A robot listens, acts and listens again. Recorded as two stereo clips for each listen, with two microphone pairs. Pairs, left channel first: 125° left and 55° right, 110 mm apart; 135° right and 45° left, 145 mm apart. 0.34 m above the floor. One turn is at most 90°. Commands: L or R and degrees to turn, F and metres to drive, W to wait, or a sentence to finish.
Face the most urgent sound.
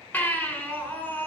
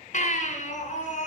R90
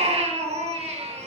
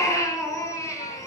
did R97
R65
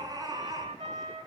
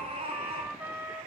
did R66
Facing the baby crying.